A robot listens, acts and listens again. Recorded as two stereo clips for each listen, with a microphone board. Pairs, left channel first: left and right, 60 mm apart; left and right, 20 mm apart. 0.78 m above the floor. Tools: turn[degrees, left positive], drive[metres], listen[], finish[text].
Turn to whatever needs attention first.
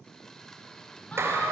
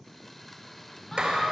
Thought: The siren: about 25° left or 155° left.
Action: turn[25]
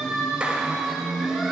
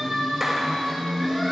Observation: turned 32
Action: finish[Facing the siren.]